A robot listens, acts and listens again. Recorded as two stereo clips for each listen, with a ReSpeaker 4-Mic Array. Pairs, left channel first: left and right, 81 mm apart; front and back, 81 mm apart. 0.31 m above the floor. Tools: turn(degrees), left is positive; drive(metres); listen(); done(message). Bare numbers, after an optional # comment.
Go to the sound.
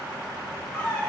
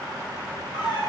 # The squeak: 10° left.
turn(10)
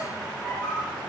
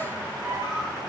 drive(1.0)
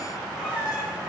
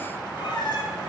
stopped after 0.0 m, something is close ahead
# The squeak is now 10° right.
turn(-10)
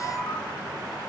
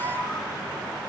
done("Blocked. The squeak is further on, straight ahead.")